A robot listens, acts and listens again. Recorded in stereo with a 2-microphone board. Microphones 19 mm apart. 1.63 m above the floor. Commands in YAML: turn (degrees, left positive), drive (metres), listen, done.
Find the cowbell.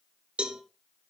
turn: -70
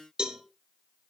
turn: -40
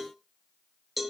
done: "Found it: a cowbell, straight ahead."